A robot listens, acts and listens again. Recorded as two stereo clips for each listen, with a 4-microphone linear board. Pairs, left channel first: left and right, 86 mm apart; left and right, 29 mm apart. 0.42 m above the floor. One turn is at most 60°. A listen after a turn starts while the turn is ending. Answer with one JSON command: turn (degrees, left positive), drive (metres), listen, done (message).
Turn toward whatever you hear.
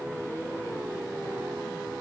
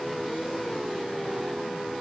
{"listen": true}
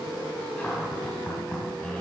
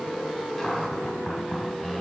{"turn": 30}
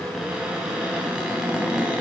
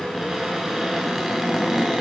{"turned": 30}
{"turn": -10}
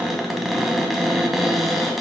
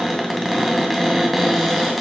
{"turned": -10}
{"done": "Facing the cupboard door."}